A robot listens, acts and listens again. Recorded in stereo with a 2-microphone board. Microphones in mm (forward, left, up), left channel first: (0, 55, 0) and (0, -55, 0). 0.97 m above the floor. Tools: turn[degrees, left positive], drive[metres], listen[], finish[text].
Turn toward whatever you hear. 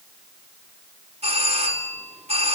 Action: turn[-90]
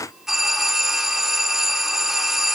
Action: finish[Facing the doorbell, 2 to 4 m away.]